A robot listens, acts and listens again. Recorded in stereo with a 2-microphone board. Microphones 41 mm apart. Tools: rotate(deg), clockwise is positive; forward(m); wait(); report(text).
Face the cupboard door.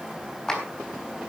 wait()
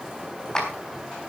wait()
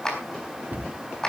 rotate(50)
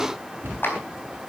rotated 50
rotate(80)
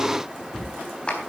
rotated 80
report("Facing the cupboard door.")